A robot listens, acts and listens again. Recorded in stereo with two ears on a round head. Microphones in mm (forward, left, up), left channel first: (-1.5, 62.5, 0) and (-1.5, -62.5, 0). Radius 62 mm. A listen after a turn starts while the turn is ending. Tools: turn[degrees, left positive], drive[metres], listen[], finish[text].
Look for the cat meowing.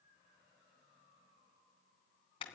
Action: listen[]
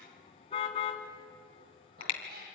Action: turn[-90]
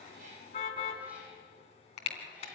Action: listen[]
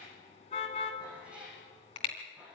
Thought: The cat meowing is now 10° right.
Action: turn[-10]
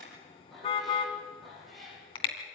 Action: finish[Facing the cat meowing, over 4 m away.]